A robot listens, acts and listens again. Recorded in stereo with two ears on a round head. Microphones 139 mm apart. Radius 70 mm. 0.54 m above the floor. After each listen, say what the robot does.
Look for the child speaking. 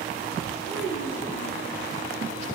Turn 90° left.
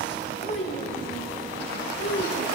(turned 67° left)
Turn 65° left.
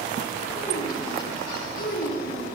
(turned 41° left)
Turn 55° left.
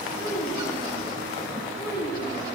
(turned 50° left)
Facing the child speaking, 1 to 2 m away.